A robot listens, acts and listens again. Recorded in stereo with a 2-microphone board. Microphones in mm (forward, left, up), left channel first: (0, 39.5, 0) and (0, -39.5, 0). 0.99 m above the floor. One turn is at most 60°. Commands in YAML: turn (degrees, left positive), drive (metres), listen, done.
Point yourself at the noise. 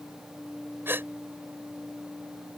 turn: -30
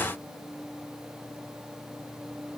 listen: true
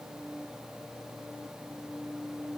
done: "I heard a gasp, but can't make it out now. It was about straight ahead or 120° right."